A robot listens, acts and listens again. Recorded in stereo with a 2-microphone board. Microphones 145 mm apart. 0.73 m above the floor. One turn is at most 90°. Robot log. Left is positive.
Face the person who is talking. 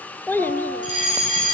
cmd yaw +30
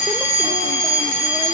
cmd idle
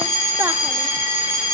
cmd idle
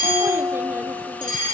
end: I heard a child speaking, but can't make it out now. It was about 15° right or 135° left.